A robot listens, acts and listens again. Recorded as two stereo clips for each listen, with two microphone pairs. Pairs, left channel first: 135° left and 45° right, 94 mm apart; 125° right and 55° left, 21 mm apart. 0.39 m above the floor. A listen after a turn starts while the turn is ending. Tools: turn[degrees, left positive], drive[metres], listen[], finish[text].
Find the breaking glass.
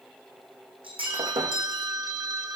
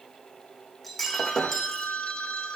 Thought: The breaking glass: 40° right.
Action: turn[-40]
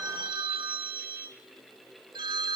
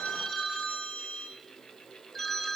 Action: finish[Facing where the breaking glass came from. I can't hear it now.]